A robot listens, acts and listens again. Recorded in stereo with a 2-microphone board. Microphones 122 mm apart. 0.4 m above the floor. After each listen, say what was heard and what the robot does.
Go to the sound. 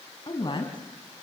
The woman speaking: about 40° left or 140° left. Turn 40° left.
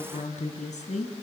So it is at 95° left. Turn 95° left.
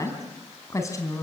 The woman speaking is now 25° left. Turn 25° left.
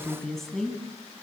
Drive 1.0 m forward.
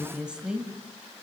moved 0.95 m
The woman speaking is now 10° right. Turn 10° right.
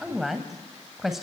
Drive 1.0 m forward.
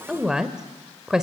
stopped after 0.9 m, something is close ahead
I am next to the woman speaking.